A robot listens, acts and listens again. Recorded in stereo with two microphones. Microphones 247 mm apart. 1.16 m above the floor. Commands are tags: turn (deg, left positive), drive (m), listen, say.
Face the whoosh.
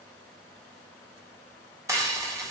<listen/>
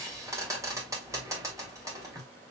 <listen/>
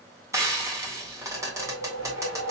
<turn deg="-90"/>
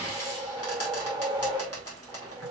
<turn deg="-15"/>
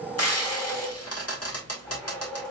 <say>Found it: a whoosh, straight ahead, 1 to 2 m away.</say>